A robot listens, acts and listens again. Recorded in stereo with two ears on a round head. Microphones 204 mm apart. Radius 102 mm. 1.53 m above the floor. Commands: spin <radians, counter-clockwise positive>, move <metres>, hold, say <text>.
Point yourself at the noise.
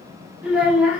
spin -0.52
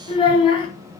spin 0.44
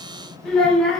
say Found it: a child speaking, straight ahead, under 1 m away.